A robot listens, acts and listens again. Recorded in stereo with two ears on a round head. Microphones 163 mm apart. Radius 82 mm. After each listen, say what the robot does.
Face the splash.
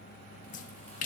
Turn 45° left.
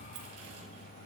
Keep listening.
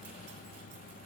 I heard a splash, but can't make it out now. It was about straight ahead or 90° left.